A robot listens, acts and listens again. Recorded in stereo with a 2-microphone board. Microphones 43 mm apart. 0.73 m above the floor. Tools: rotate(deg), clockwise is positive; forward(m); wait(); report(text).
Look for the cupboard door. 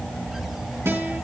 wait()
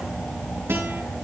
wait()
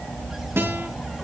report("I can't make out a cupboard door, only a guitar.")